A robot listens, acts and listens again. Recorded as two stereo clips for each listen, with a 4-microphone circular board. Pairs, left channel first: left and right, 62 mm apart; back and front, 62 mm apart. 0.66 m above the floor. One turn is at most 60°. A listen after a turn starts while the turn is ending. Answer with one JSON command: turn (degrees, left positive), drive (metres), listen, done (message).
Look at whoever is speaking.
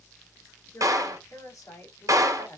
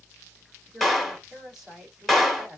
{"turn": 60}
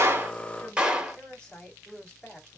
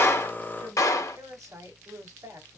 {"turn": 15}
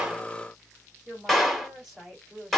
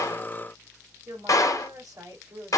{"done": "Found it: a woman speaking, straight ahead, 2 to 4 m away."}